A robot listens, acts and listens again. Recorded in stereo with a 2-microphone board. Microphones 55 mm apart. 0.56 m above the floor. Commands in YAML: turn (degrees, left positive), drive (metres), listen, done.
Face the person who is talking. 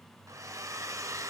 listen: true
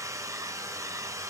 listen: true
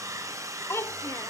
turn: 55
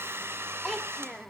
done: "Facing the child speaking, under 1 m away."